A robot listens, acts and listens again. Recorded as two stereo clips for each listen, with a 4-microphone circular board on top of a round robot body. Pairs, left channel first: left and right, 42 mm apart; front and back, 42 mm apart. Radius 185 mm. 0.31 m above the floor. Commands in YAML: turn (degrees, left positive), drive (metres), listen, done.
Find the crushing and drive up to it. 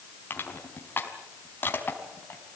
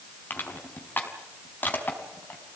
turn: 50
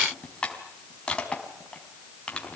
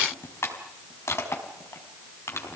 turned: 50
turn: 25
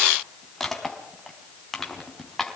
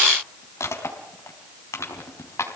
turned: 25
drive: 1.0
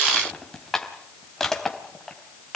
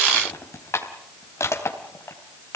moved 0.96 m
turn: 10
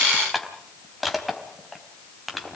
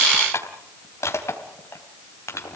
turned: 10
drive: 1.0
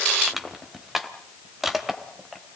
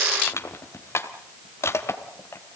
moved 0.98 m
drive: 1.0
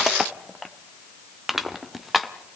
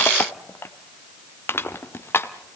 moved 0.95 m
drive: 1.0
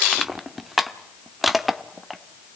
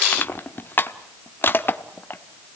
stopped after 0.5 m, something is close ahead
done: "I am next to the crushing."